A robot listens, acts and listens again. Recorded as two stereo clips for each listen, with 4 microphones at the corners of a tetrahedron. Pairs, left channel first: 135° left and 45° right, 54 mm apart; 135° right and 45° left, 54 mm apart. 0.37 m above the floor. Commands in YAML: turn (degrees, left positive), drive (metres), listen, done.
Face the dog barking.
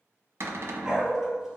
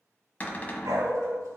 turn: 40
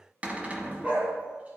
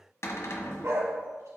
turn: 20
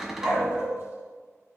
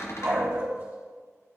done: "Found it: a dog barking, straight ahead, 2 to 4 m away."